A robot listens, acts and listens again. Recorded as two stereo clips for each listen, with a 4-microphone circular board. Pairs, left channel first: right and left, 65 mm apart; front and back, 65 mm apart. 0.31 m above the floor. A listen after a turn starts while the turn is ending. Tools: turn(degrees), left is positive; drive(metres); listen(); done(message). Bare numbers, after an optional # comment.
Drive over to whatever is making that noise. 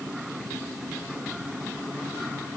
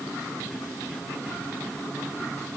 listen()
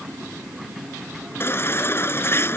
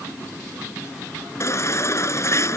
# The baby crying: 40° right.
turn(-40)
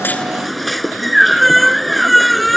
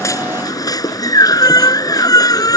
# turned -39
drive(1.0)
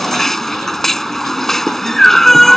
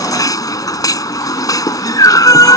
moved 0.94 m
drive(1.0)
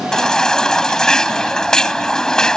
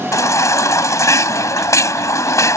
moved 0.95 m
# The baby crying is now 15° right.
turn(-15)
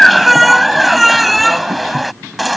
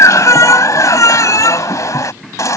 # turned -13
drive(1.0)
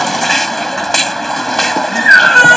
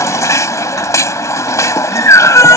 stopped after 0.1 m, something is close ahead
done("I am next to the baby crying.")